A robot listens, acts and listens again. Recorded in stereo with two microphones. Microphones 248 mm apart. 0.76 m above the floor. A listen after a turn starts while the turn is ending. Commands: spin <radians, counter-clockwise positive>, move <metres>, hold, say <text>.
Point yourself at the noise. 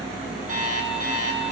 spin -0.61
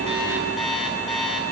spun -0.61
say Found it: an alarm clock, straight ahead, over 4 m away.